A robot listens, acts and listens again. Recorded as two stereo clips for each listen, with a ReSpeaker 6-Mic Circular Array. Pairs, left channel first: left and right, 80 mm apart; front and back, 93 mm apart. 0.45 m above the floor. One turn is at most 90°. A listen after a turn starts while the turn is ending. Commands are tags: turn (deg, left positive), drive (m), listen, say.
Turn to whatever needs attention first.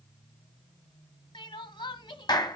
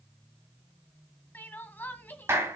<turn deg="70"/>
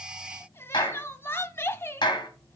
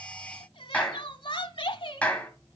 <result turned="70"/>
<turn deg="30"/>
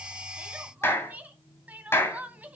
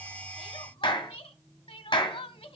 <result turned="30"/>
<turn deg="-20"/>
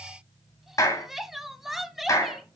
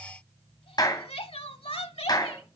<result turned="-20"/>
<say>Found it: crying, straight ahead.</say>